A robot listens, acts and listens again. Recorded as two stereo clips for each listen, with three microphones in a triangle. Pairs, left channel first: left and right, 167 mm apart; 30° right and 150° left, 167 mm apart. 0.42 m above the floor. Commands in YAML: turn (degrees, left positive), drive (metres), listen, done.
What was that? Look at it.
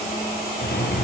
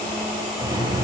turn: 85
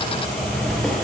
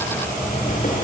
done: "Facing the drawer."